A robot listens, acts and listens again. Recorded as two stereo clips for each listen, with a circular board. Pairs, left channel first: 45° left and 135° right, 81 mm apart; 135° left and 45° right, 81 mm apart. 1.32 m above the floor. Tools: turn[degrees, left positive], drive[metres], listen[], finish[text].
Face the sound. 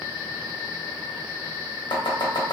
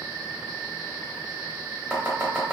Thought: The chopping: 30° left.
Action: turn[30]
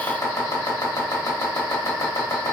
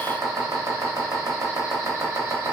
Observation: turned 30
Action: finish[Facing the chopping.]